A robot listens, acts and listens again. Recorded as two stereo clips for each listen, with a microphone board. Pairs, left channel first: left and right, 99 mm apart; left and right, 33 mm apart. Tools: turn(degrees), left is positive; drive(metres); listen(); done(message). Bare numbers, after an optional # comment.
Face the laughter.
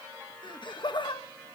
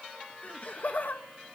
# The laughter: about 50° left or 130° left.
turn(50)
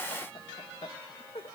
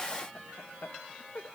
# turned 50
# So it is at 75° left.
turn(75)
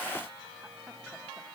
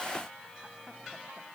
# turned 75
listen()
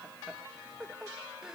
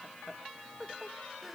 done("Found it: laughter, straight ahead, 1 to 2 m away.")